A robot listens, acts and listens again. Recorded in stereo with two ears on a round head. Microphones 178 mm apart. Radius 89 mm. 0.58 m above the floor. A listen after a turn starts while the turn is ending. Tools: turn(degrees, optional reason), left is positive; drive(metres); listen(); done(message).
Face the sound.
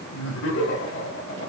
turn(degrees=65, reason="The laughter: about 65° left or 115° left.")
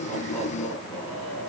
done("Facing the laughter.")